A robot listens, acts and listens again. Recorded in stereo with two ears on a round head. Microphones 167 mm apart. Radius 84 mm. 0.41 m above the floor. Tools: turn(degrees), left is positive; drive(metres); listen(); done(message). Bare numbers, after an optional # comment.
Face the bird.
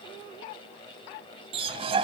# The bird: about 30° right or 150° right.
turn(-30)
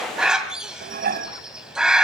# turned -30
done("Facing the bird, 2 to 4 m away.")